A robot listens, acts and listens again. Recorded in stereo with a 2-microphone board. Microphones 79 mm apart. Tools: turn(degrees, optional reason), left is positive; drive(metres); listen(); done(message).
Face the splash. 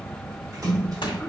turn(degrees=-50, reason="The splash: about 50° right or 130° right.")
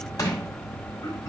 listen()
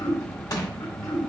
done("I heard a splash, but can't make it out now. It was about straight ahead or 80° right.")